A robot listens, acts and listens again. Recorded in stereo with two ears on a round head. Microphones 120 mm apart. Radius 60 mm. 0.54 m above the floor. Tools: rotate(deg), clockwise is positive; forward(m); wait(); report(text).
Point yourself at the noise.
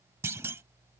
rotate(20)
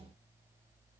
wait()
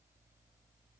report("I heard a clunk, but can't make it out now. It was about straight ahead or 140° right.")